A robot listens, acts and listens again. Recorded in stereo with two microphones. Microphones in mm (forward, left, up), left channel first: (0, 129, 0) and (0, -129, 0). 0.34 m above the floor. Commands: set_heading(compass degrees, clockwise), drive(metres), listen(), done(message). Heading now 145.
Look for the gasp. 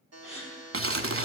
set_heading(120)
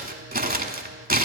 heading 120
listen()
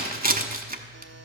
done("I heard a gasp, but can't make it out now. It was about straight ahead or 130° left.")